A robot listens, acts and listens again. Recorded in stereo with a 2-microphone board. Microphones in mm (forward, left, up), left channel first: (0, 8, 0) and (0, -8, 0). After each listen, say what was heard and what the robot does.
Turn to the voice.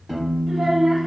The child speaking: about 25° right or 155° right. Turn 25° right.
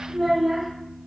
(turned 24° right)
Facing the child speaking, under 1 m away.